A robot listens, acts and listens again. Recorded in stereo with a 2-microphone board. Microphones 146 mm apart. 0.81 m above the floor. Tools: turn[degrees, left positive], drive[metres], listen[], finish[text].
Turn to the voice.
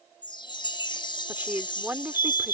Action: turn[-30]
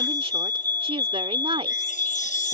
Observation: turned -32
Thought: So it is at 135° right.
Action: turn[-135]
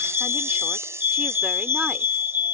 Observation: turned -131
Action: listen[]
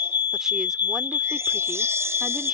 Action: listen[]
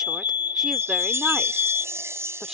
Action: finish[Facing where the woman speaking came from. I can't hear it now.]